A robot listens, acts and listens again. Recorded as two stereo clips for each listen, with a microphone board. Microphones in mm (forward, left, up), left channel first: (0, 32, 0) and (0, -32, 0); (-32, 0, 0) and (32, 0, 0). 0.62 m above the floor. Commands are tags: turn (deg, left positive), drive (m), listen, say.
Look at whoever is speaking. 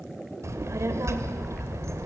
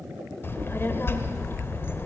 <turn deg="-130"/>
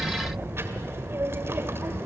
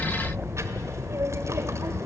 <turn deg="-40"/>
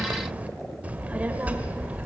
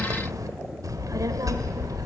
<turn deg="-25"/>
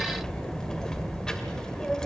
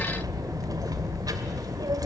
<turn deg="10"/>
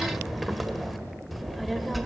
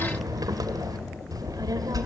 <say>Found it: a child speaking, straight ahead, 1 to 2 m away.</say>